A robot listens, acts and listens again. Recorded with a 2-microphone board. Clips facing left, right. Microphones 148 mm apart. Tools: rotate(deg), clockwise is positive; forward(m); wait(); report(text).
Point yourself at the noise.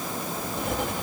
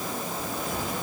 rotate(-60)
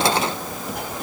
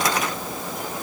rotate(-60)
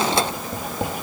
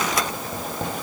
rotate(-10)
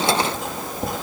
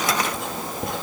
report("Found it: writing, straight ahead, 2 to 4 m away.")